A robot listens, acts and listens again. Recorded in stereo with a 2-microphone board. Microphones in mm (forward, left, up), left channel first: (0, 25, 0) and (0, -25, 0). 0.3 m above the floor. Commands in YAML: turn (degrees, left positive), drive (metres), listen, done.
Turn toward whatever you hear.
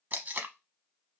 turn: -35
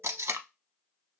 turn: -105
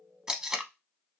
turn: -15
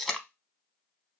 done: "Found it: tape being pulled, straight ahead."